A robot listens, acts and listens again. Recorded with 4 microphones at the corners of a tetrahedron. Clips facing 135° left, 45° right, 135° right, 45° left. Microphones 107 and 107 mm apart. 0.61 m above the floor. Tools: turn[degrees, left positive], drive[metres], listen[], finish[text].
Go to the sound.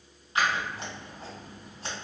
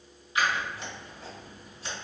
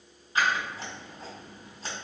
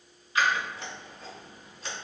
Thought: The scissors: 170° left.
Action: turn[170]
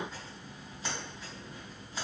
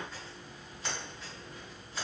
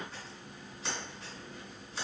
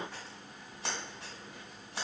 Thought: The scissors is now 60° left.
Action: turn[60]
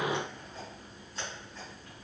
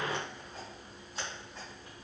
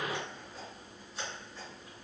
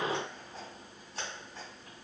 Thought: The scissors is now 25° left.
Action: turn[25]
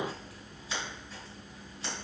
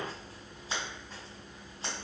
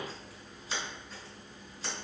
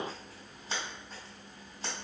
Action: drive[1.0]
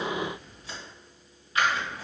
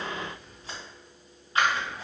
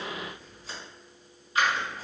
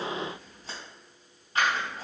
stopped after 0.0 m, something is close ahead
Thought: The scissors is now 10° left.
Action: turn[10]
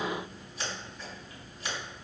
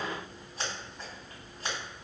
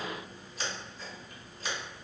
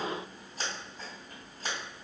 Action: finish[Something is in my way. I am facing the scissors but have not reached it.]